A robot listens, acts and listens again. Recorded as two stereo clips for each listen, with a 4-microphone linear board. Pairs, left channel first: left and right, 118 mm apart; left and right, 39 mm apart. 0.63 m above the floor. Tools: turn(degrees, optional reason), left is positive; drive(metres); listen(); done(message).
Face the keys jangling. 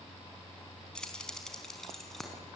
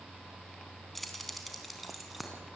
turn(degrees=30)
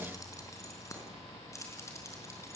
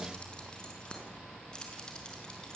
turn(degrees=155, reason="So it is at 155° left.")
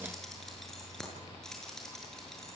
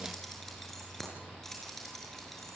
done("Facing the keys jangling, over 4 m away.")